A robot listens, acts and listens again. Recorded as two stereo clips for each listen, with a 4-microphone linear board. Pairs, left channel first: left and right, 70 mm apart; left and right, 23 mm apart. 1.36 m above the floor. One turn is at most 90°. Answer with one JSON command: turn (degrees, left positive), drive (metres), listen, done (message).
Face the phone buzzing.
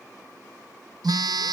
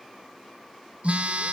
{"turn": -65}
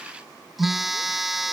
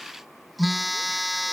{"done": "Found it: a phone buzzing, straight ahead."}